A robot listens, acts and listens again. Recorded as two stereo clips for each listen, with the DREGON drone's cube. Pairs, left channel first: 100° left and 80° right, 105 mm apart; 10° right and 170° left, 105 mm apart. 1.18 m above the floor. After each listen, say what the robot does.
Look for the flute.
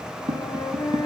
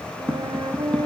Turn 145° left.
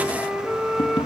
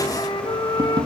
Facing the flute, 1 to 2 m away.